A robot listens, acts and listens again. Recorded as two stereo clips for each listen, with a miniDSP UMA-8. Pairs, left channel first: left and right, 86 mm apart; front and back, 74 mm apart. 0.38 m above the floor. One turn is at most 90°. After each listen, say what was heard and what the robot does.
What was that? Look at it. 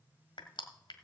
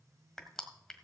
The crushing: 85° left. Turn 85° left.
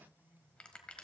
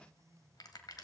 The crushing is now 15° left. Turn 15° left.
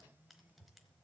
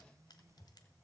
Keep listening.
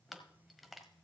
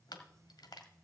Facing the crushing.